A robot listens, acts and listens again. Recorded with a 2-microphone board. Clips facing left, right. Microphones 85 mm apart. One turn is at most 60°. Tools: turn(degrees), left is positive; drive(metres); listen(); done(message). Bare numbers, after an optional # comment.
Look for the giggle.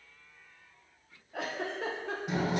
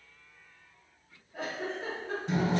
turn(60)
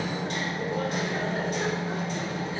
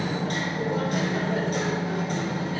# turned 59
# Nothing new. It was at 30° left.
turn(30)
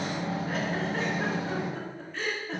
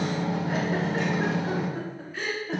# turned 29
done("Facing the giggle.")